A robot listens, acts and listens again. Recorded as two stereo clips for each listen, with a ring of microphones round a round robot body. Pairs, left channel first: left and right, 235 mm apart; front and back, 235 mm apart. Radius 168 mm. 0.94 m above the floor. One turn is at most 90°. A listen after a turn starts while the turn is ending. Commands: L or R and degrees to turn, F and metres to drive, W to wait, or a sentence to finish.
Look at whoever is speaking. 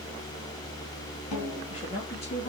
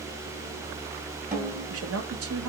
L90
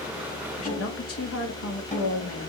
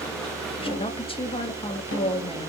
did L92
L70
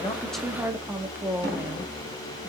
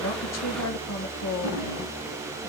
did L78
R10
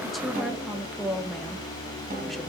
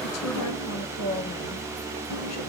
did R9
Found it: a woman speaking, straight ahead, 1 to 2 m away.